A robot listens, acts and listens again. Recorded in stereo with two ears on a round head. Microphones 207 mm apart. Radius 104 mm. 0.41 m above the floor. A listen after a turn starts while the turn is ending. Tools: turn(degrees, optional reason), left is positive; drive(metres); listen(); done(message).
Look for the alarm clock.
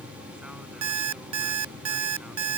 turn(degrees=-90)
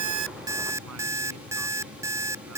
turn(degrees=-15, reason="So it is at 15° right.")
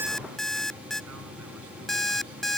done("Facing the alarm clock.")